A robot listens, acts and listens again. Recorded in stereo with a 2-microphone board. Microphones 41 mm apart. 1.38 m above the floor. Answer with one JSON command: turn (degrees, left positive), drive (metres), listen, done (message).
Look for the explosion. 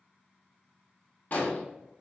{"turn": 45}
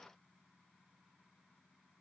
{"listen": true}
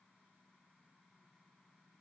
{"done": "I heard an explosion, but can't make it out now. It was about straight ahead or 90° left."}